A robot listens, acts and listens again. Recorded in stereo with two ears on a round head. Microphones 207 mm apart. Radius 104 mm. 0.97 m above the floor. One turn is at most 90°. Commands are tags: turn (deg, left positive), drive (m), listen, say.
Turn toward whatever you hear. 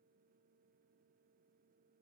<listen/>
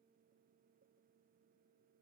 <listen/>
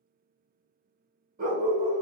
<turn deg="-35"/>
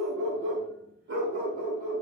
<turn deg="-90"/>
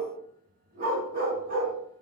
<turn deg="-40"/>
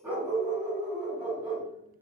<say>Facing the dog barking, 1 to 2 m away.</say>